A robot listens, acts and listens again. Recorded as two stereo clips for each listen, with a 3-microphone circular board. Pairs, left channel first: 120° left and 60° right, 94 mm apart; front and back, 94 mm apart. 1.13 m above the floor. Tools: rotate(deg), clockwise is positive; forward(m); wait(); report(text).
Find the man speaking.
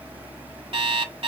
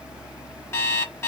wait()
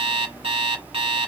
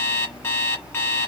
wait()
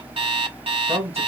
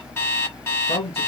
report("Found it: a man speaking, straight ahead.")